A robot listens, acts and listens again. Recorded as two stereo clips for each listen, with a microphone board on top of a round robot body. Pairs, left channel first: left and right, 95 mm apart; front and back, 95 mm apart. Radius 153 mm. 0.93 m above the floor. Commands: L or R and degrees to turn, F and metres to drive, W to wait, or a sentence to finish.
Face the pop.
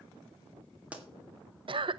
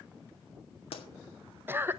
R15
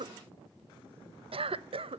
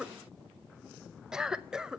I heard a pop from this way, but can't make it out now.